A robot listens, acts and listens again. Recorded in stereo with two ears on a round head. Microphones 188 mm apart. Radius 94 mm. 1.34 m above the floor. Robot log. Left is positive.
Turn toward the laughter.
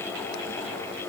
cmd idle
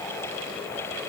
cmd idle
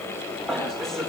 cmd yaw +30
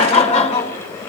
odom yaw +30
note: So it is at 150° left.
cmd yaw +150
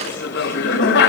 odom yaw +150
note: The laughter is now 55° left.
cmd yaw +55
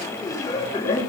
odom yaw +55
note: The laughter is now 15° left.
cmd yaw +15
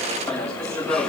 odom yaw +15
end: Found it: laughter, straight ahead.